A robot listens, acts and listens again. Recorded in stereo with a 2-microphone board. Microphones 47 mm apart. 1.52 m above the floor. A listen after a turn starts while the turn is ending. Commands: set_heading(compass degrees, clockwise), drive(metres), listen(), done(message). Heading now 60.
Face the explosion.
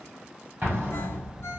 set_heading(105)
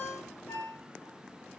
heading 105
listen()
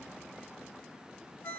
done("I heard an explosion, but can't make it out now. It was about straight ahead or 90° right.")